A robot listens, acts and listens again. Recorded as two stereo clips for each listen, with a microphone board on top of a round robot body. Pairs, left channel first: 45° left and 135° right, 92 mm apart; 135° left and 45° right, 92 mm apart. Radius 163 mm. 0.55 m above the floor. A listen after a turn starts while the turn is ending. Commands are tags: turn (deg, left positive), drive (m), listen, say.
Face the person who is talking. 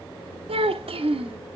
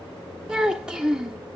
<turn deg="-125"/>
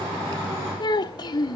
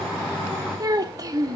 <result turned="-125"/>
<turn deg="10"/>
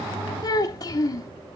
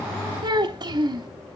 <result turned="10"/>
<say>Found it: a child speaking, straight ahead, under 1 m away.</say>